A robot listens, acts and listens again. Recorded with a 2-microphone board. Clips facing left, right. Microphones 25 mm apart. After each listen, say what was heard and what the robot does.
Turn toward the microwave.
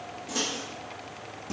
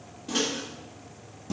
The microwave: about 65° right or 115° right. Turn 65° right.
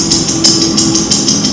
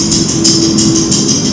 Keep listening.
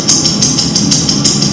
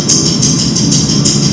Keep listening.
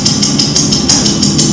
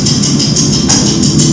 I heard a microwave, but can't make it out now. It was about straight ahead or 50° right.